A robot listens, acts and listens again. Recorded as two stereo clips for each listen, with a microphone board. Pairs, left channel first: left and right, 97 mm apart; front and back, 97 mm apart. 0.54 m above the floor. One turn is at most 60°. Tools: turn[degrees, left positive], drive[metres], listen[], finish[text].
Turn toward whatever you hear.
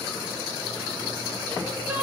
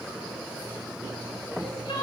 Thought: The crying: 15° right.
Action: turn[-15]
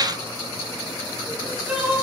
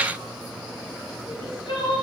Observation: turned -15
Thought: The crying is now 10° right.
Action: turn[-10]
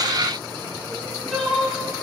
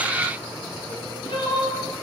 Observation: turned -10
Action: finish[Facing the crying, over 4 m away.]